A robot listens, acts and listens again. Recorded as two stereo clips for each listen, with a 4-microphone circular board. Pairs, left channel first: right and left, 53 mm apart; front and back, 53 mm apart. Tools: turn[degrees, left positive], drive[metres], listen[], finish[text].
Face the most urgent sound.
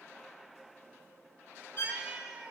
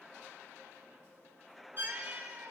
Action: listen[]
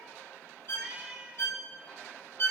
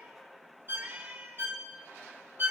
Action: listen[]
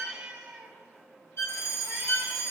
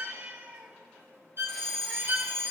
Thought: The fire alarm: 80° right.
Action: turn[-80]
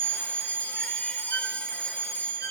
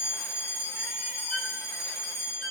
Thought: The fire alarm is now 25° right.
Action: turn[-25]
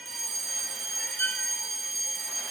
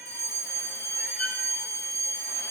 Action: finish[Found it: a fire alarm, straight ahead, 2 to 4 m away.]